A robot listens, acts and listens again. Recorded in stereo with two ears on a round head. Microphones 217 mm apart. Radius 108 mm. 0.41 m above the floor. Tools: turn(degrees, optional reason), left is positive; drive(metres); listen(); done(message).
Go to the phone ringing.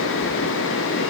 listen()
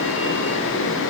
listen()
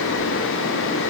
done("I can't make out a phone ringing.")